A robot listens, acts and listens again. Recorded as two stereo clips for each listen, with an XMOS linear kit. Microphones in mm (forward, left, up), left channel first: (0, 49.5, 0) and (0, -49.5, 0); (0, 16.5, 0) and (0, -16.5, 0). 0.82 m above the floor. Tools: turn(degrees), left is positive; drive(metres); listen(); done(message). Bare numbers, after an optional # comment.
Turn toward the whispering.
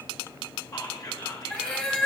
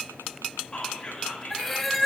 # The whispering: about 40° left or 140° left.
turn(40)
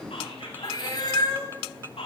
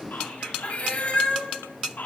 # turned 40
# So it is at 100° left.
turn(100)
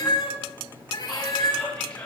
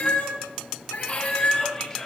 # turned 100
# The whispering is now 10° left.
turn(10)
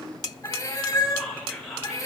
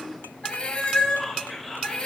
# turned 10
done("Facing the whispering, 2 to 4 m away.")